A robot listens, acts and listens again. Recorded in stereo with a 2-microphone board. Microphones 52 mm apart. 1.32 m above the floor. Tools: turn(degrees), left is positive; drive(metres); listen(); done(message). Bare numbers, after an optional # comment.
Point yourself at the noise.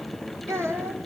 # The child speaking: about 60° right or 120° right.
turn(-60)
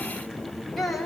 done("Facing the child speaking.")